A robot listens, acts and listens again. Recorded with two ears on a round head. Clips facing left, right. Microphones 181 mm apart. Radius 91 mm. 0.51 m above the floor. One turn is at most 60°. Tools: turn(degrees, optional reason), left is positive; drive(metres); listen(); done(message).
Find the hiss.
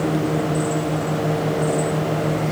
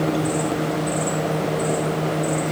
listen()
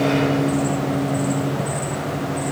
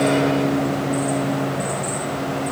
listen()
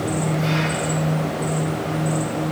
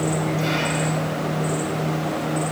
done("I can't make out a hiss.")